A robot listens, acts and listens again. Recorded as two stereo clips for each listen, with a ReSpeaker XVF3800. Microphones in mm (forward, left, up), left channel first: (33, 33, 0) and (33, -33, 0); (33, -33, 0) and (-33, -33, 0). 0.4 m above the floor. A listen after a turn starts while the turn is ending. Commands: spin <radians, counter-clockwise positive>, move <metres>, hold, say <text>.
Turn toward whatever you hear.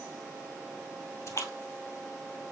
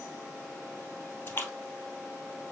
spin 0.96
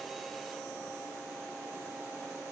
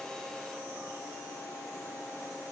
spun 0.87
say I heard a splash from this way, but can't make it out now.